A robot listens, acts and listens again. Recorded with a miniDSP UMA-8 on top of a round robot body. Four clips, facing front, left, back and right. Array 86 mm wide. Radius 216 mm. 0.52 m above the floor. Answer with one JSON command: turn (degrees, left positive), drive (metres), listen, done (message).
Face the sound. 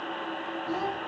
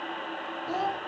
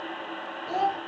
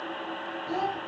{"turn": 150}
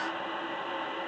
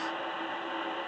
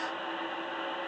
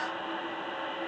{"listen": true}
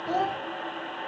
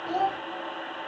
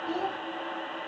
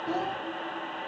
{"turn": 20}
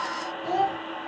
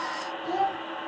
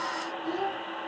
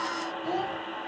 {"done": "Facing the child speaking."}